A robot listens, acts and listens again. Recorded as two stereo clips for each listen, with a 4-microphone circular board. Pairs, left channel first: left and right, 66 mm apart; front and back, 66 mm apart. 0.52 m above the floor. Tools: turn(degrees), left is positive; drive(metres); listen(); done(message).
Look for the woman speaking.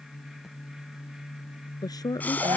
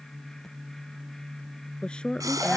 turn(degrees=75)
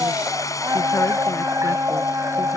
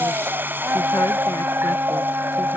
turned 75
listen()
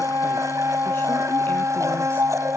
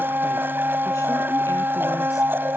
listen()
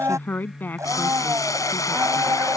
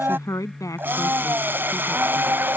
turn(degrees=30)
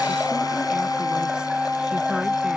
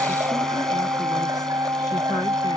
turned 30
listen()
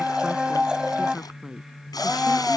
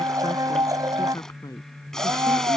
turn(degrees=-10)
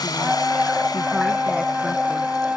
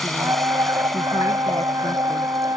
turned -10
listen()
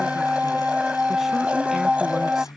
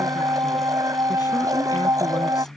listen()
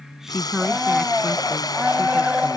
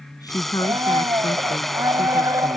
done("Found it: a woman speaking, straight ahead.")